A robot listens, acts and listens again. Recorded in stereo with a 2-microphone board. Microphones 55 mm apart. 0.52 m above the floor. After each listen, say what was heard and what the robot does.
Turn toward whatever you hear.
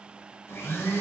The blender: about 50° left or 130° left. Turn 50° left.
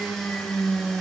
Facing the blender.